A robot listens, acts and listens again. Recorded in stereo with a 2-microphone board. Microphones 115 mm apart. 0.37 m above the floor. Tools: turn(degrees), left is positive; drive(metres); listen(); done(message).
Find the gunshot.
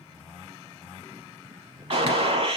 turn(degrees=-55)
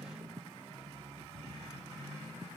listen()
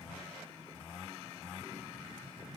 done("I heard a gunshot, but can't make it out now. It was about straight ahead or 70° right.")